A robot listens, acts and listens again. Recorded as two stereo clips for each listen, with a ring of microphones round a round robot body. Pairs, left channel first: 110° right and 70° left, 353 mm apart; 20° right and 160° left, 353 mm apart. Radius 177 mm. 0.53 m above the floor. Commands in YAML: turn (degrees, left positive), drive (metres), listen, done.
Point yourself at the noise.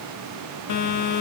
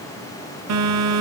turn: -155
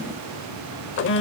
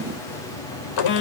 turn: -55
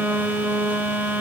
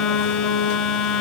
turn: -20
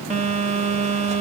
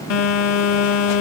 done: "Facing the phone buzzing."